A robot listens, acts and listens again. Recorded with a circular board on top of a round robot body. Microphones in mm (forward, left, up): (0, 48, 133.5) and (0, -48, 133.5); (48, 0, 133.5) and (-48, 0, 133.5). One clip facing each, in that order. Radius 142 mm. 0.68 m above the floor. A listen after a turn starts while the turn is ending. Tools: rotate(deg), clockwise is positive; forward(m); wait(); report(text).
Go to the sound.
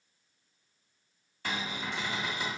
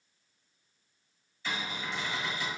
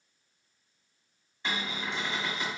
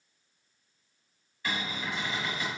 rotate(-65)
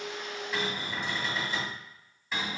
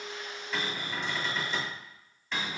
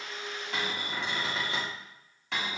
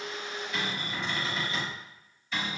forward(1.0)
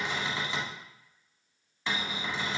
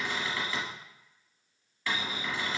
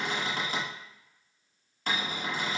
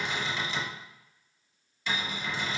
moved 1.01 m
rotate(-25)
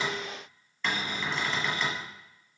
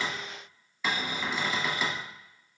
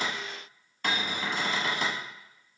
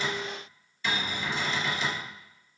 rotate(10)
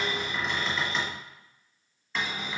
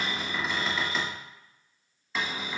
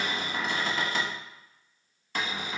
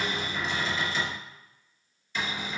forward(1.0)
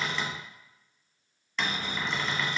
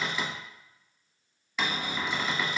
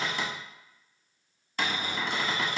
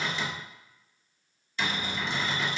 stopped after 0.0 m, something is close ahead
rotate(10)
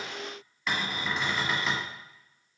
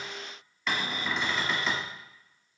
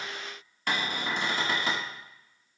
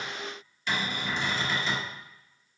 report("Arrived at the cupboard door, straight ahead.")